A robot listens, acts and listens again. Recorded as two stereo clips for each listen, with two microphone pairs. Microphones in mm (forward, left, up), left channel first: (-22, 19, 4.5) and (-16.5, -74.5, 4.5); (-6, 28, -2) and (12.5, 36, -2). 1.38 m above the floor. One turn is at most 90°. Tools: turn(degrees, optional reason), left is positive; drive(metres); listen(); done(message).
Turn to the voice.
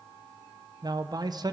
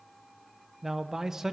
turn(degrees=-45, reason="The man speaking: 45° right.")
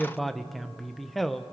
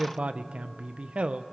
done("Found it: a man speaking, straight ahead.")